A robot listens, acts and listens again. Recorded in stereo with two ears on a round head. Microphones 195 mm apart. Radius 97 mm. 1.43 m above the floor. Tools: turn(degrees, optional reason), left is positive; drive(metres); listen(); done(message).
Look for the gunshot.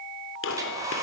turn(degrees=60, reason="The gunshot: about 60° left or 120° left.")
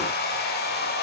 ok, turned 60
listen()
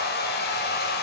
done("I heard a gunshot, but can't make it out now. It was about straight ahead or 60° left.")